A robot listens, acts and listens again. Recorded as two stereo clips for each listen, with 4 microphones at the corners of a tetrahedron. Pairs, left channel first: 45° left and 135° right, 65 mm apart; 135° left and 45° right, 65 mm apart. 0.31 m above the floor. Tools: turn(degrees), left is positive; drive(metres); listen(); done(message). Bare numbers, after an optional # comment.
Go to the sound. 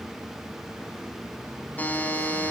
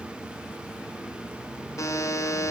# The buzzer: 110° left.
turn(110)
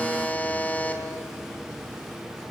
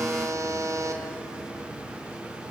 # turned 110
# The buzzer is now 15° right.
turn(-15)
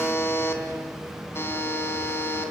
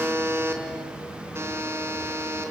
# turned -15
drive(1.0)
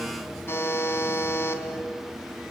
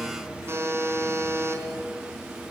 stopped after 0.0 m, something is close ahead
done("Blocked. The buzzer is further on, straight ahead.")